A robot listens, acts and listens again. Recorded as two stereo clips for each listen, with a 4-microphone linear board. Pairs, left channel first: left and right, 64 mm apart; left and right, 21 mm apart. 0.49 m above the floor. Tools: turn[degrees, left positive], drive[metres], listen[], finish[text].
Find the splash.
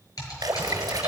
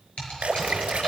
Thought: The splash: about 75° right or 105° right.
Action: turn[-75]
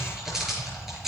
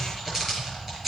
Action: listen[]
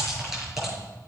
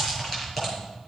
Action: finish[I heard a splash, but can't make it out now. It was about straight ahead or 30° right.]